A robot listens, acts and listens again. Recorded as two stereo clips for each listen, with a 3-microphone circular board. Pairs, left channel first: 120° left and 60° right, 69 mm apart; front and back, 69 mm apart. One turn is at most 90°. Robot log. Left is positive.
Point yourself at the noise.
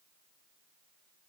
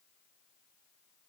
cmd idle
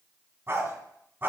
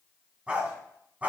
note: The dog barking: 115° right.
cmd yaw -90
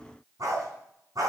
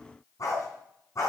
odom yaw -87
note: The dog barking is now 35° right.
cmd yaw -35
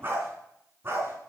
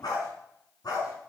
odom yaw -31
note: The dog barking is now 10° right.
cmd yaw -10
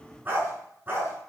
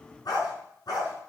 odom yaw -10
end: Found it: a dog barking, straight ahead.